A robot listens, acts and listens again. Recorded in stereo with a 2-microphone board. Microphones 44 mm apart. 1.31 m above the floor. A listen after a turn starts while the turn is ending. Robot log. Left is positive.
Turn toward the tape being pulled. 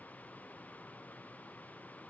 cmd idle
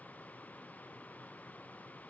cmd idle
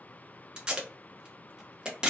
note: The tape being pulled: about 15° right or 165° right.
cmd yaw -15
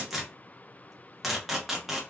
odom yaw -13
end: Facing the tape being pulled, under 1 m away.